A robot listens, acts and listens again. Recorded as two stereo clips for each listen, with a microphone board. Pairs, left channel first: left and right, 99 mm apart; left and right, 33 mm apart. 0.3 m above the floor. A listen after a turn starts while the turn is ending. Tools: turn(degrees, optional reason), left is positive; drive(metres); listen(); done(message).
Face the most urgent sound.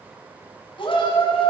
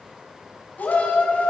turn(degrees=55, reason="The shout: about 55° left or 125° left.")
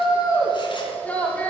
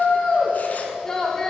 turn(degrees=15, reason="So it is at 15° left.")
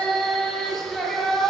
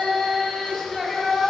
done("Facing the shout.")